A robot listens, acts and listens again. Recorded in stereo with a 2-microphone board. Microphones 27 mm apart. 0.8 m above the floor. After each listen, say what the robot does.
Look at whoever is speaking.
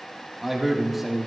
Turn 30° right.
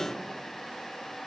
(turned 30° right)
Keep listening.
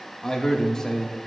Turn 25° left.
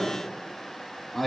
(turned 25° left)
Turn 10° left.
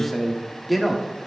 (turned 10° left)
Found it: a man speaking, straight ahead, 1 to 2 m away.